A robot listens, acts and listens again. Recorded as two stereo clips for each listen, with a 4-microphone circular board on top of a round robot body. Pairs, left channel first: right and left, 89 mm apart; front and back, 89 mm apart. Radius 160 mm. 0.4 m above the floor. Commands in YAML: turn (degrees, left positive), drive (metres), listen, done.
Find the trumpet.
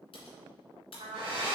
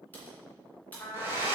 turn: 75
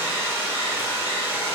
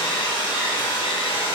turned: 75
listen: true
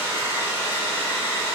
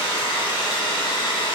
listen: true
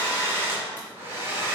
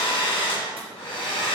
done: "I heard a trumpet from this way, but can't make it out now."